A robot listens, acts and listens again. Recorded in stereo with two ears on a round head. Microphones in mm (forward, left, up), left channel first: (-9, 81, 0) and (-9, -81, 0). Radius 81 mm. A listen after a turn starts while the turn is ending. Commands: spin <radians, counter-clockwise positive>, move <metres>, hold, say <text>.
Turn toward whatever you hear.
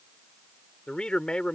spin 0.52
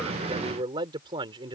spin -0.44
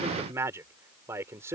spin -0.26
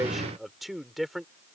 say Found it: a man speaking, straight ahead.